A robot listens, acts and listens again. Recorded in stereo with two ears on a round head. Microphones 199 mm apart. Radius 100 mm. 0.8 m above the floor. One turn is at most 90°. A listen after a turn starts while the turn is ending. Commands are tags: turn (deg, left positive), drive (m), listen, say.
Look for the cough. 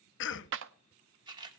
<turn deg="55"/>
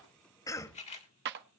<turn deg="15"/>
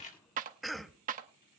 <say>Found it: a cough, straight ahead.</say>